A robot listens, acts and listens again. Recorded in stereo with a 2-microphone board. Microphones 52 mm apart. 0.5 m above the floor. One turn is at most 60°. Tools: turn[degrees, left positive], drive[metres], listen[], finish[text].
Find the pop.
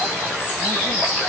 Action: listen[]
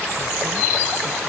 Action: listen[]
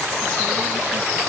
Action: finish[I can't make out a pop to turn to.]